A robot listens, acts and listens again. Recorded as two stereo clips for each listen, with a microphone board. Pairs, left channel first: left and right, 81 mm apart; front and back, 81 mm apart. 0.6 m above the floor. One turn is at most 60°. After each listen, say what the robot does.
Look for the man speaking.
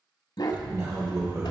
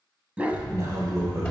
Turn 60° right.
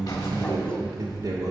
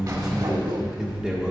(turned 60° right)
Turn 60° right.
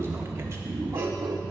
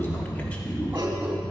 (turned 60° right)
Turn 60° right.
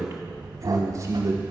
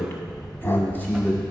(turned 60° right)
Turn 60° right.
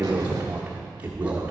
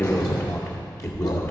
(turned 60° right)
Turn 20° right.
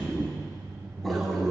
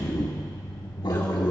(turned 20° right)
Facing the man speaking.